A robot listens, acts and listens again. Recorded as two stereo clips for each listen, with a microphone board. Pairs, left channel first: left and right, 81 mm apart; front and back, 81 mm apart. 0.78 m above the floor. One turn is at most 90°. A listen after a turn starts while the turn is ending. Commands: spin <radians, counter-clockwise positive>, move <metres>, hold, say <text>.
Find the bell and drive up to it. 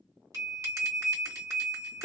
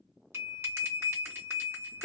spin -1.57
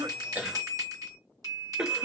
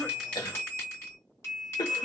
spin -0.96
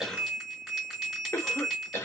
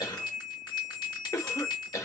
move 1.0
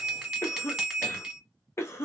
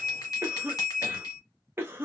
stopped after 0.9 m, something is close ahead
spin -0.17
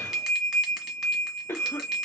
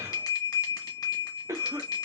say Arrived at the bell, straight ahead.